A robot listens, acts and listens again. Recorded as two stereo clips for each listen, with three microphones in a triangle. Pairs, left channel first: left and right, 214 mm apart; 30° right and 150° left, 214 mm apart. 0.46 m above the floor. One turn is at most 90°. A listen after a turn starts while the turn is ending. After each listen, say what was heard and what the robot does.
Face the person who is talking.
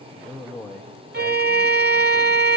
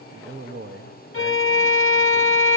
The man speaking: 175° left. Turn 90° left.
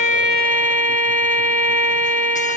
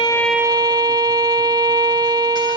Nothing new. It was at 85° left. Turn 85° left.
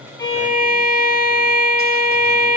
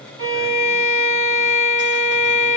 Keep listening.
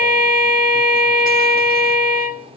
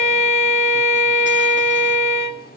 Facing where the man speaking came from. I can't hear it now.